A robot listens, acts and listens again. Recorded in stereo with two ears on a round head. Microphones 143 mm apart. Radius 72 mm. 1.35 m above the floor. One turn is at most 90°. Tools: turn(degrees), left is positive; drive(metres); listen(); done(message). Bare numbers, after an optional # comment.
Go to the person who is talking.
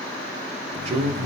# The man speaking: about 40° right or 140° right.
turn(-40)
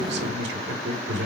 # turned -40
# So it is at 100° right.
turn(-90)
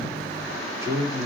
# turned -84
# The man speaking is now 20° right.
turn(-20)
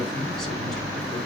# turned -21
listen()
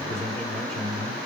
drive(1.0)
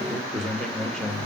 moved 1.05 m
drive(1.0)
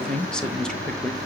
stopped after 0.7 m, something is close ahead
done("Arrived at the man speaking, straight ahead.")